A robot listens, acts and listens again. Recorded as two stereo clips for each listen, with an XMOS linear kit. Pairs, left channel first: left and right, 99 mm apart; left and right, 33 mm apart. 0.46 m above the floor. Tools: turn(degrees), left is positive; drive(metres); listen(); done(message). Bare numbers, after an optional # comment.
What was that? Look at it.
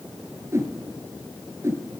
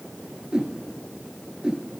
# The whoosh: about 30° right or 150° right.
turn(-30)
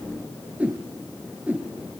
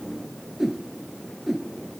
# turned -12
# So it is at 15° right.
turn(-15)
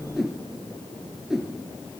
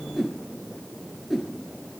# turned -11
done("Facing the whoosh.")